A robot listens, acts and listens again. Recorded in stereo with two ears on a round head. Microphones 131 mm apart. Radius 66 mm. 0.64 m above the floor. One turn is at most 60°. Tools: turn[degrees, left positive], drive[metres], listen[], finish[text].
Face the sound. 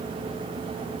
Action: listen[]
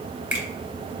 Action: turn[-30]
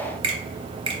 Thought: So it is at 135° right.
Action: turn[-60]
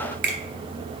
Thought: The finger snap is now 95° right.
Action: turn[-60]
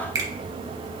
Thought: The finger snap is now 25° right.
Action: turn[-25]
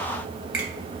Action: listen[]
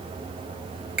Action: listen[]
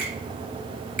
Action: finish[Facing the finger snap, 2 to 4 m away.]